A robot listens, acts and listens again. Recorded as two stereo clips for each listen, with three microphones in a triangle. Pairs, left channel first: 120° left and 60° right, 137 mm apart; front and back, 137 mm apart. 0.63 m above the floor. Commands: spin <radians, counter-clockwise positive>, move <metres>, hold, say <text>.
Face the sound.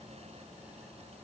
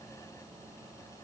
hold
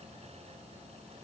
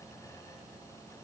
hold
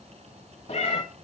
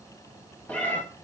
spin 1.31
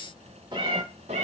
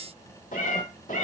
spin -0.44
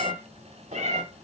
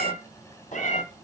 spin -0.52
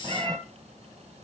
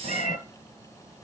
say Found it: a cat meowing, straight ahead.